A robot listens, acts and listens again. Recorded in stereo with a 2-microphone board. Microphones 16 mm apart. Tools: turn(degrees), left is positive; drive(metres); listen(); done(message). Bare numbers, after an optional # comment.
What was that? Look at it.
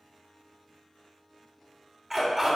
# The dog barking: about 25° right or 155° right.
turn(-25)
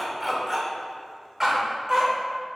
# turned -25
# The dog barking: about 35° right or 145° right.
turn(-35)
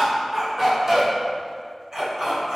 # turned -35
# The dog barking: about 30° right or 150° right.
turn(-30)
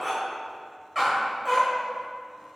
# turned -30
done("Facing the dog barking.")